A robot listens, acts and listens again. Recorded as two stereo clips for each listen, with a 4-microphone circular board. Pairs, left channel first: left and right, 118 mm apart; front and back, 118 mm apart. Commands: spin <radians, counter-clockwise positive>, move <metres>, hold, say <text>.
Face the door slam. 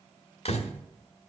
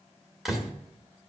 spin 1.66
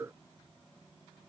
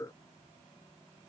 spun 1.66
say Facing where the door slam came from. I can't hear it now.